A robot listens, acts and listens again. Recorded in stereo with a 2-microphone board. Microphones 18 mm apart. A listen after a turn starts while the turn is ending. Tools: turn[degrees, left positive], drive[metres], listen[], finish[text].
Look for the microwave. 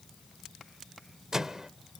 Thought: The microwave: about 30° right or 150° right.
Action: turn[-30]
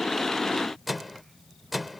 Action: finish[Facing the microwave.]